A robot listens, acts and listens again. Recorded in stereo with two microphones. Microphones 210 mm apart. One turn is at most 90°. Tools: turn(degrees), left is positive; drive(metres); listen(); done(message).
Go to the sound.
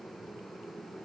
listen()
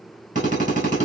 turn(degrees=-35)
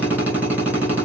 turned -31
turn(degrees=-10)
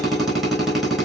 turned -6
drive(metres=1.0)
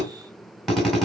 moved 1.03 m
drive(metres=1.0)
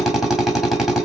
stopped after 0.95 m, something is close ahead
done("Arrived at the drill, straight ahead.")